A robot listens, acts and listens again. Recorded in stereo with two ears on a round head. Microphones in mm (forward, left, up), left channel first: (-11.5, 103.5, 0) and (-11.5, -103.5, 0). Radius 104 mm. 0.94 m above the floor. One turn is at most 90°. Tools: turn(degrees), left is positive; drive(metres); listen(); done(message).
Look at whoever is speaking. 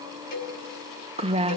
turn(degrees=-25)
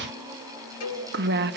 turn(degrees=-90)
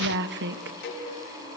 turn(degrees=-60)
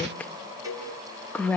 done("Facing the woman speaking.")